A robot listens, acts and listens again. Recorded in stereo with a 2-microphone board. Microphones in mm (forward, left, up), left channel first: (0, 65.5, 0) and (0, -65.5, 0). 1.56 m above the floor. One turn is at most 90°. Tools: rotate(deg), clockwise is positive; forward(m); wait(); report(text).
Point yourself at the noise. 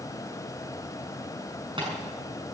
rotate(40)
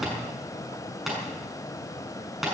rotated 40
report("Facing the tapping, over 4 m away.")